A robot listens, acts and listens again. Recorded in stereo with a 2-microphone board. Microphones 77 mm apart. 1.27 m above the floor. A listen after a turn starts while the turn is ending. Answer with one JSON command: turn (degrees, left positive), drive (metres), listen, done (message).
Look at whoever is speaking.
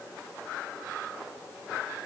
{"listen": true}
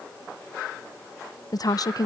{"turn": 55}
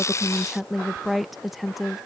{"done": "Facing the woman speaking."}